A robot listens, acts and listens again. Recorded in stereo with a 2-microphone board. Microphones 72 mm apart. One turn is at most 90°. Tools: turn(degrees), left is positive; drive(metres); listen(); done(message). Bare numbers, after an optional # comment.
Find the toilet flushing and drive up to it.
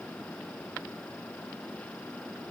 listen()
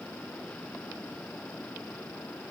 listen()
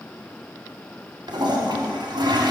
turn(-90)
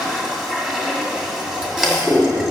# So it is at 10° right.
turn(-10)
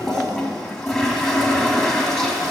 drive(1.0)
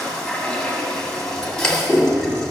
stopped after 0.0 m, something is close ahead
done("Something is in my way. I am facing the toilet flushing but have not reached it.")